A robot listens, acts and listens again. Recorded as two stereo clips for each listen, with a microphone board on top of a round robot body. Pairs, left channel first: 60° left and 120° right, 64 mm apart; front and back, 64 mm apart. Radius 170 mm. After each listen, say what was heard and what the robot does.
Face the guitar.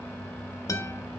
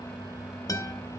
The guitar: 30° left. Turn 30° left.
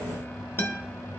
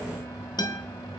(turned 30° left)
Found it: a guitar, straight ahead, under 1 m away.